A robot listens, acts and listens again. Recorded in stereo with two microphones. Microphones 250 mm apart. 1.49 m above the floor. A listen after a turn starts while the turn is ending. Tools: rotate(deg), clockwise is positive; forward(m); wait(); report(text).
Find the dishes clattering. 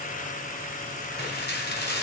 rotate(-40)
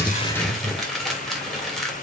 report("Facing the dishes clattering, 2 to 4 m away.")